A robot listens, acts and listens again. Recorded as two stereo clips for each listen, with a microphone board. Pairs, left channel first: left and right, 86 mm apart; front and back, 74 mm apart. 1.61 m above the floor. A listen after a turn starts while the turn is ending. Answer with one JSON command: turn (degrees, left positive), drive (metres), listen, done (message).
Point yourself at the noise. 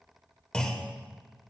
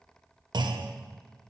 {"turn": 170}
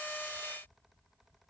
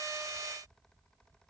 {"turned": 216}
{"turn": -45}
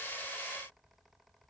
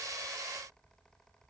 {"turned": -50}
{"done": "Facing where the clunk came from. I can't hear it now."}